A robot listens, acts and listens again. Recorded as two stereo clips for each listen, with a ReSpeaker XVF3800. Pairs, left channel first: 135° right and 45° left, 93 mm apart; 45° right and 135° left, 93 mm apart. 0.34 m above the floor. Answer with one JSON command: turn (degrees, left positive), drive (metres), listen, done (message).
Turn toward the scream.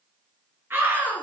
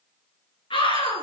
{"turn": -20}
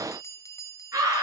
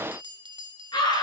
{"done": "Facing the scream."}